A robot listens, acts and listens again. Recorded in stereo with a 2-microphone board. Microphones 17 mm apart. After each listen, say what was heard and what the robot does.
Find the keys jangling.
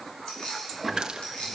The keys jangling: about 65° left or 115° left. Turn 65° left.
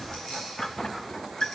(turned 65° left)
Keep listening.
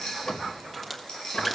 So it is at 45° left. Turn 45° left.
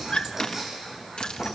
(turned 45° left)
Keep listening.
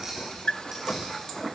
The keys jangling is now 15° right. Turn 15° right.
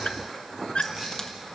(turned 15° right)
Keep listening.
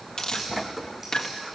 Keep listening.
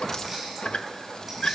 Facing where the keys jangling came from. I can't hear it now.